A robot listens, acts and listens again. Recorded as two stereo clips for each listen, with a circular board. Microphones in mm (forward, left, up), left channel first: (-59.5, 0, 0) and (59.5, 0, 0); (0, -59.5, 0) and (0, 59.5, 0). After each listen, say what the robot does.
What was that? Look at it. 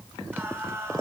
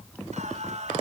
Turn 65° left.
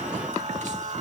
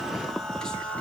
Turn 10° right.
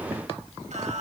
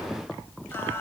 Keep listening.
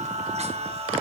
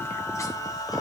Turn 35° right.
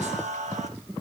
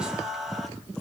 Facing the singing.